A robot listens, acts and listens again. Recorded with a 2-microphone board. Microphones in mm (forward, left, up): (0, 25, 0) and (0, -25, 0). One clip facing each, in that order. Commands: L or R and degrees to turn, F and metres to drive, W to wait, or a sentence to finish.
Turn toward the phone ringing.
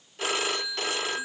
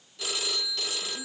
L40
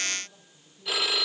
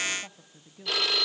Found it: a phone ringing, straight ahead, under 1 m away.